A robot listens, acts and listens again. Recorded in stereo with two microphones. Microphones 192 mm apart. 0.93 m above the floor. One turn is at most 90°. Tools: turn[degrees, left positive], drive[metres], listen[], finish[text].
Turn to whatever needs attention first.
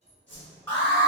Action: turn[30]
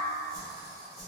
Action: listen[]
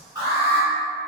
Thought: So it is at 15° right.
Action: turn[-15]
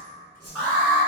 Action: finish[Facing the alarm, 1 to 2 m away.]